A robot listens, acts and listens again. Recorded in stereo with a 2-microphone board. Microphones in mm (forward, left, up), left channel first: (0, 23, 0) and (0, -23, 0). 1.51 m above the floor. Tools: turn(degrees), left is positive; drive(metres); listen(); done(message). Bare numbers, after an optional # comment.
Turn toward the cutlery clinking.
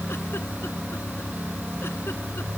listen()
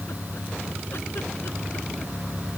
listen()
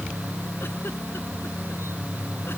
done("I can't make out cutlery clinking to turn to.")